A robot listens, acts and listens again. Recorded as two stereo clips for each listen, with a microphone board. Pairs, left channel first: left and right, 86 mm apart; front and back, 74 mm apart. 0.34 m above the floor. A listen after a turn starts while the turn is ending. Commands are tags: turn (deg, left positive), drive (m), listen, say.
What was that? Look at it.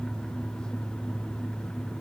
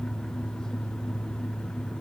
<listen/>
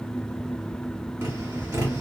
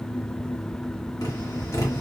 <turn deg="-35"/>
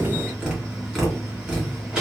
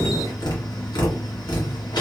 <say>Facing the tapping, 1 to 2 m away.</say>